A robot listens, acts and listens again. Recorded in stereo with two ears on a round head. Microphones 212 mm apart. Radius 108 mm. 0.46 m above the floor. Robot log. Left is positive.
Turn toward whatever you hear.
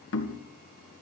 note: The knocking: about 55° left or 125° left.
cmd yaw +55
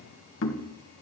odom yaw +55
note: So it is at 65° left.
cmd yaw +65
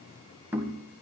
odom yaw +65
note: The knocking is now 10° right.
cmd yaw -10
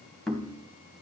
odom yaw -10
end: Found it: knocking, straight ahead, 2 to 4 m away.